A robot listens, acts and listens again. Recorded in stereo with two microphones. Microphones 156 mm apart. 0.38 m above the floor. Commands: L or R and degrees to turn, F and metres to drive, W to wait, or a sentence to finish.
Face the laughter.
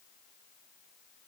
W
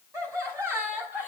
R30
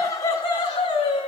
L35
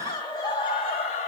L40
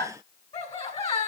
L30
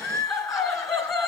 Facing the laughter, 1 to 2 m away.